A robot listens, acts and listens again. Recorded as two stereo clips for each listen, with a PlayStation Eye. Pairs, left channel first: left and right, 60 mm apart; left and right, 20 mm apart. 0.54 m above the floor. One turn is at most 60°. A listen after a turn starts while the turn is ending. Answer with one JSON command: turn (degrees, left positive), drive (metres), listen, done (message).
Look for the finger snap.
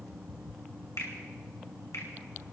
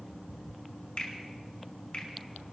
{"turn": 60}
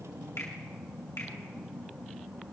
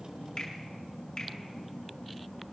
{"turn": 55}
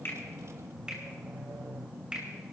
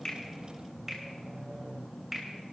{"turn": -15}
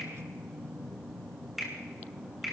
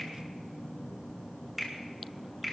{"done": "Facing the finger snap, 2 to 4 m away."}